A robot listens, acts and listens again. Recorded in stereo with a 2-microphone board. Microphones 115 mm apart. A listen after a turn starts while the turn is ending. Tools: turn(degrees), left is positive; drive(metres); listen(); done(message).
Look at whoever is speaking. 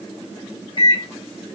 listen()
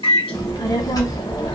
turn(degrees=35)
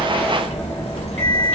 turn(degrees=105)
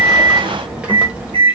turn(degrees=-10)
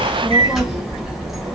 done("Found it: a child speaking, straight ahead, under 1 m away.")